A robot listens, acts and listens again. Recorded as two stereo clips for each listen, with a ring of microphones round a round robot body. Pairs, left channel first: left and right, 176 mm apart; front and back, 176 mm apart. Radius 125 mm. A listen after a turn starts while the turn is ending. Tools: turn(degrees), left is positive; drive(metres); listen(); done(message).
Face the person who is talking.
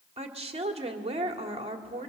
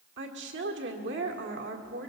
turn(degrees=-145)
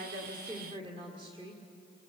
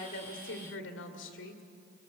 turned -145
turn(degrees=-20)
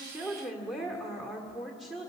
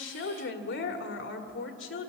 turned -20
done("Found it: a woman speaking, straight ahead.")